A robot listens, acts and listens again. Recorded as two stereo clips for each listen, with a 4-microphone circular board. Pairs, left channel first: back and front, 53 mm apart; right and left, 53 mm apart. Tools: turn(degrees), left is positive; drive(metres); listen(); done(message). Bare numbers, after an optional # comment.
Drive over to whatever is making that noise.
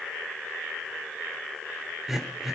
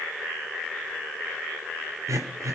# The throat clearing: 85° left.
turn(85)
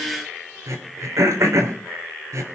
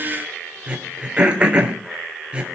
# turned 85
# The throat clearing is now 20° left.
turn(20)
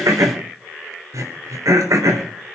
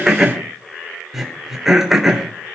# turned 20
drive(1.0)
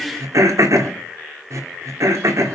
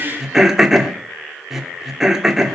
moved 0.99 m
# The throat clearing is now 10° left.
turn(10)
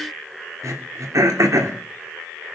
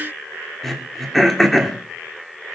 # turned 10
drive(1.0)
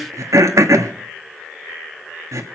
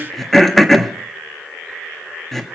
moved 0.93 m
drive(1.0)
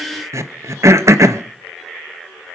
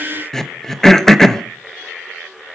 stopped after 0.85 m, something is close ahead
# The throat clearing is now 10° right.
turn(-10)
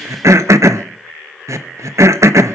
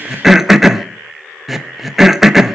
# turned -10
done("Arrived at the throat clearing, straight ahead.")